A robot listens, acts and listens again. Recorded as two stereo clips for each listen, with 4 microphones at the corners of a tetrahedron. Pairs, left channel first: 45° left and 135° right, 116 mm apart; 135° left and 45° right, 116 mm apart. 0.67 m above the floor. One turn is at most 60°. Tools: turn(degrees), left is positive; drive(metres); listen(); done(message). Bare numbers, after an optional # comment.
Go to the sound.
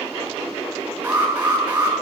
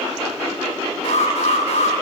# The alarm: 150° left.
turn(60)
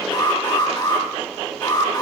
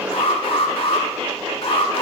# The alarm is now 100° left.
turn(60)
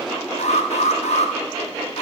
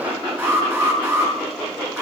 # The alarm is now 30° left.
turn(30)
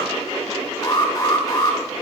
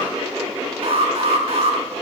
# The alarm is now 15° right.
turn(-15)
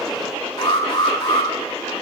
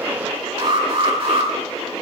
drive(1.0)
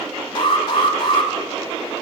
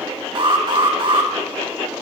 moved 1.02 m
drive(1.0)
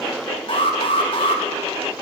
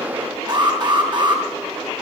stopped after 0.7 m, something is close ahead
done("Blocked. The alarm is further on, straight ahead.")